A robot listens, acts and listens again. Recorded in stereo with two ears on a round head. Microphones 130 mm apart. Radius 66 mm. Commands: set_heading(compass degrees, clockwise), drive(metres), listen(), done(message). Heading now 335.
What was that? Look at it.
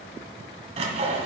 set_heading(25)
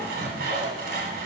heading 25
set_heading(100)
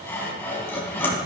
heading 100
set_heading(85)
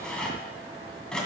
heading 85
done("Found it: sawing, straight ahead, 2 to 4 m away.")